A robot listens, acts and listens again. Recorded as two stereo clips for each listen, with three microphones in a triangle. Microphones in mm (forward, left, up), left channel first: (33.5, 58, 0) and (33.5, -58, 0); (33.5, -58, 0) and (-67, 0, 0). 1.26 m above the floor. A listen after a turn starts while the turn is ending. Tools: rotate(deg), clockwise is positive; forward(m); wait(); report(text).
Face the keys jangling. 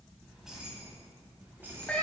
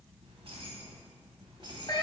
rotate(160)
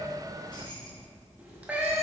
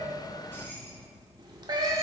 rotate(-45)
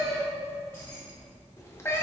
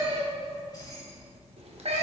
rotate(-35)
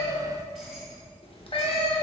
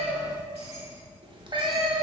report("Found it: keys jangling, straight ahead.")